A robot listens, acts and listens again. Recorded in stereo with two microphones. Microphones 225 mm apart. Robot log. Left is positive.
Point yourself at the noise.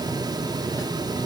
cmd idle
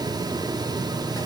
cmd idle
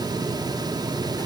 end: I can't make out anything.